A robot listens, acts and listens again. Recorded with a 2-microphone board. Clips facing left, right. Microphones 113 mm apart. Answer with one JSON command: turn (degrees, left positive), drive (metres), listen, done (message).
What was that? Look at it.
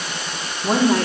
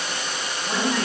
{"turn": 75}
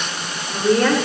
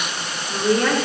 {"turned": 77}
{"done": "Facing the woman speaking."}